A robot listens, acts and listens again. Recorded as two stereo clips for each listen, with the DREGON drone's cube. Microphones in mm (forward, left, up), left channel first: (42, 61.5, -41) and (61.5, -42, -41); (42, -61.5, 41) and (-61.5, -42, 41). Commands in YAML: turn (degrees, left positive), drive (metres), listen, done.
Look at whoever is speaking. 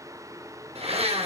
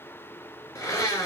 listen: true
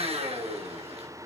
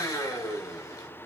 listen: true
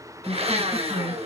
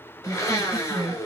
turn: -125
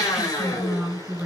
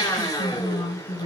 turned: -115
done: "Facing the woman speaking, over 4 m away."